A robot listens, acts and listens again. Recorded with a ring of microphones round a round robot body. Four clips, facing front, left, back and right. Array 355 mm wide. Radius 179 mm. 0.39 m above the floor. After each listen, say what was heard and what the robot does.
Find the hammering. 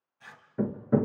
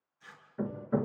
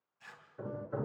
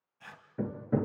The hammering: 10° right. Turn 10° right.
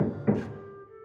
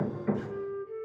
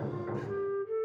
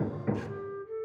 Facing the hammering.